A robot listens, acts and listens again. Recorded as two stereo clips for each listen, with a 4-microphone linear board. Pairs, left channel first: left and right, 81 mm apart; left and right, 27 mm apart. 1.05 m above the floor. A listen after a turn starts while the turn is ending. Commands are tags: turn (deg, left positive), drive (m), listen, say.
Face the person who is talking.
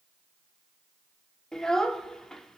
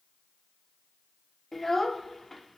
<turn deg="30"/>
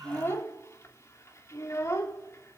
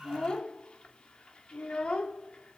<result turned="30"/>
<turn deg="140"/>
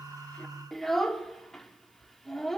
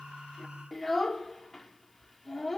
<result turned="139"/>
<say>Facing the child speaking, 1 to 2 m away.</say>